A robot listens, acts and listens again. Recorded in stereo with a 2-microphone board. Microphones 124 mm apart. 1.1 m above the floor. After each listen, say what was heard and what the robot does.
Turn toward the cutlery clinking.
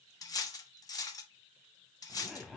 The cutlery clinking: about 30° left or 150° left. Turn 30° left.
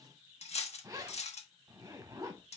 So it is at 120° left. Turn 120° left.
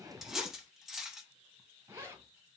Facing the cutlery clinking, under 1 m away.